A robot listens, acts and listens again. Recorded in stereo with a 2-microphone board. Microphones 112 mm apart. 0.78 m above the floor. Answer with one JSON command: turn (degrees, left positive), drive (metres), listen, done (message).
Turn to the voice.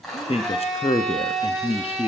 {"turn": 60}
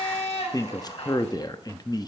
{"turn": 40}
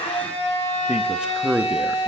{"turn": -10}
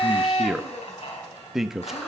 {"done": "Facing the man speaking, under 1 m away."}